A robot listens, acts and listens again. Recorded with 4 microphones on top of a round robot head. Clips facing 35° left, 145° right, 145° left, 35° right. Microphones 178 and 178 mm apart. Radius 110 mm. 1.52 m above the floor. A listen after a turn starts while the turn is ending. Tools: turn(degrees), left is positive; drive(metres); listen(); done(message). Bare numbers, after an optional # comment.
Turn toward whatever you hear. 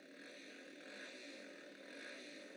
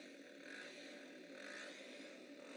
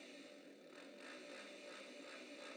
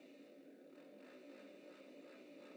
listen()
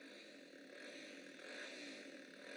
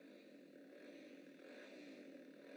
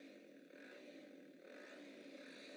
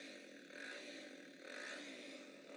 listen()
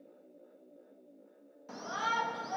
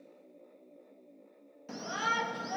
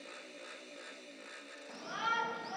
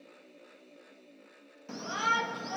# The shout: 75° right.
turn(-75)
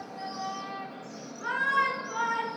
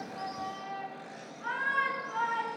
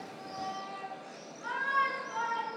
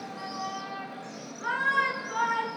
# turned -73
done("Found it: a shout, straight ahead, 2 to 4 m away.")